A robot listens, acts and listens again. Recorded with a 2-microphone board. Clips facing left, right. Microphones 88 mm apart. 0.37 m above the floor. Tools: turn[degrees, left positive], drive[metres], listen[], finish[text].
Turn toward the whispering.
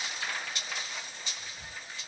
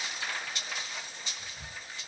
Thought: The whispering: about 60° right or 120° right.
Action: turn[-60]
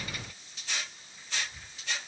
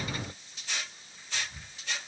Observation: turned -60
Thought: So it is at 55° right.
Action: turn[-55]
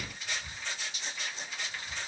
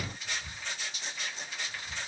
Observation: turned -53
Action: finish[Facing the whispering, 2 to 4 m away.]